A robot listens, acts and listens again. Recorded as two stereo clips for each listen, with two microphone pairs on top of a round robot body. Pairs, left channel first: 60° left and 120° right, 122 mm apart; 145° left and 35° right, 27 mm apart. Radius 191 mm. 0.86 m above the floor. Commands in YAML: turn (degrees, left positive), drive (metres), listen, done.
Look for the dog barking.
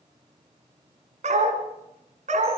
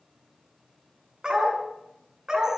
turn: -95
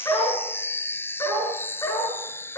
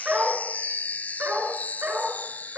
done: "Found it: a dog barking, straight ahead, over 4 m away."